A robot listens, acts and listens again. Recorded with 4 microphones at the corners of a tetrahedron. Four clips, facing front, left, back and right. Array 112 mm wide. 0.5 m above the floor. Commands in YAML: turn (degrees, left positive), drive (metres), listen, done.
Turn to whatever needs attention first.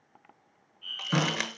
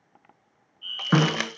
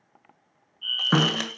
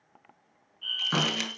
turn: -120
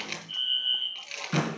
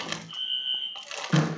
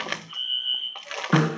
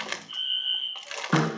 turn: -50
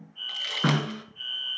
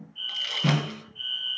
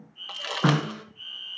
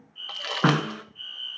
done: "Found it: a fire alarm, straight ahead, 2 to 4 m away."